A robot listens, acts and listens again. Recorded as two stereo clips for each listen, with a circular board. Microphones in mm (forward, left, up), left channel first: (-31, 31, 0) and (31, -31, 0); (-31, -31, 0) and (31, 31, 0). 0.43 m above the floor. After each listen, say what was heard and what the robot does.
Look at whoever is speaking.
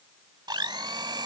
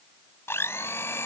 Keep listening.
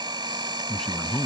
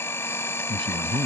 The man speaking: 50° left. Turn 50° left.
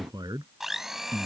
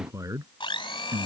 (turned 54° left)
Found it: a man speaking, straight ahead.